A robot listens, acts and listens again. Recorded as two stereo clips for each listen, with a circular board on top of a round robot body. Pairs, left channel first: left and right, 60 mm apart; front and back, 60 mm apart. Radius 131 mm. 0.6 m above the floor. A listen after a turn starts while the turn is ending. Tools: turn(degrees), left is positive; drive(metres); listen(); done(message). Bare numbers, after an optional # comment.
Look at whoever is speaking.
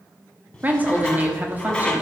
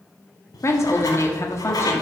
# The woman speaking: 30° right.
turn(-30)
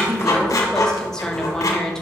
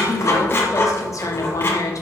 # The woman speaking is now 10° left.
turn(10)
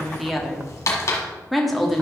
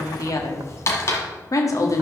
done("Found it: a woman speaking, straight ahead.")